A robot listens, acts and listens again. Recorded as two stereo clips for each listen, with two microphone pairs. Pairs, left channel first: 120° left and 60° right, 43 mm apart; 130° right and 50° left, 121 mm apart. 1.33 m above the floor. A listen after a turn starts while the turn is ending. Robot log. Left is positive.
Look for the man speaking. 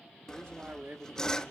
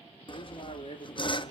note: The man speaking: 95° right.
cmd yaw -95
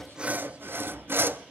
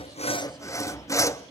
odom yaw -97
cmd idle
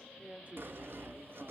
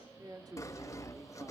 note: The man speaking is now 10° right.
cmd yaw -10
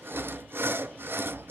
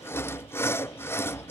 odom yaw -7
cmd idle
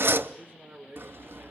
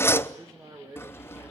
note: The man speaking is now 10° right.
cmd yaw -10
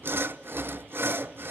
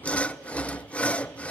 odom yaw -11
cmd idle
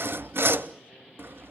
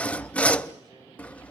cmd idle
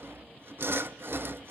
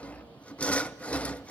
end: Facing where the man speaking came from. I can't hear it now.